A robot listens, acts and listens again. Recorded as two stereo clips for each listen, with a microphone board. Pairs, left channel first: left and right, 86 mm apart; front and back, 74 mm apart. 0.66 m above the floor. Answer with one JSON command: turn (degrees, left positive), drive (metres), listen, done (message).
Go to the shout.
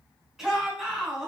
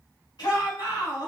{"drive": 1.0}
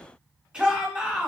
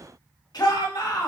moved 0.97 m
{"turn": -15}
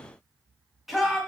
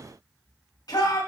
{"drive": 1.0}
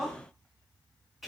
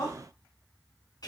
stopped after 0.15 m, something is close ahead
{"done": "Arrived at the shout, straight ahead."}